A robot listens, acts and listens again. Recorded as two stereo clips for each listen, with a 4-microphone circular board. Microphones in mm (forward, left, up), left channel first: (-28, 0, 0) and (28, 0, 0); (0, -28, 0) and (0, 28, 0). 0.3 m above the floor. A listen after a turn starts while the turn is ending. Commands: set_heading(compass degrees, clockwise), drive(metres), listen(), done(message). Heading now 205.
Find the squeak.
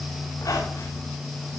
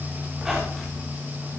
set_heading(35)
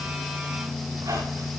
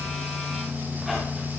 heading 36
listen()
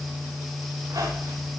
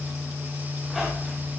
done("Found it: a squeak, straight ahead, over 4 m away.")